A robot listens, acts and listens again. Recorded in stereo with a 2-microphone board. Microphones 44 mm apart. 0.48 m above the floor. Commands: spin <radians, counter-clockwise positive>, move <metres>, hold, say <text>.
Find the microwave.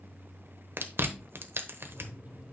spin -0.79
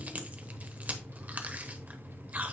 spin -1.57
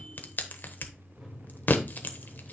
say Found it: a microwave, straight ahead.